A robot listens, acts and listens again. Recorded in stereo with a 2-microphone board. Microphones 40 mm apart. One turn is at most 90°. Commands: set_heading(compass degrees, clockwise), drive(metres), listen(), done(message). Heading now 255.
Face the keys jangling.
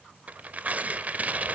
listen()
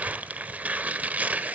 listen()
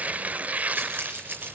set_heading(315)
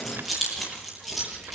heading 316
done("Facing the keys jangling.")